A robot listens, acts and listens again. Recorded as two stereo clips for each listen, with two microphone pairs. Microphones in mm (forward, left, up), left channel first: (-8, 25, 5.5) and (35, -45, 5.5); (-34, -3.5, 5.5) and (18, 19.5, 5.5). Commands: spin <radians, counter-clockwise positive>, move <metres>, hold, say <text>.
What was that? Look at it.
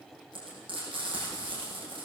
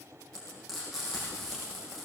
spin -1.13
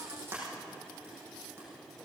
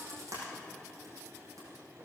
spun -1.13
say Facing the frying.